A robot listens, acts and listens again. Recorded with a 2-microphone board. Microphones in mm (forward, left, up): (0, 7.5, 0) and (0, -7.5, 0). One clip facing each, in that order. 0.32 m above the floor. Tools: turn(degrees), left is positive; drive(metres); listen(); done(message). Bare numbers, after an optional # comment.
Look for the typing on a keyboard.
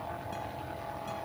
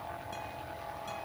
listen()
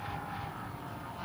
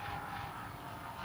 listen()
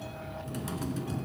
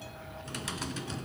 # The typing on a keyboard: about 50° right or 130° right.
turn(-50)
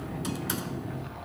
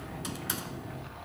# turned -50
done("Facing the typing on a keyboard.")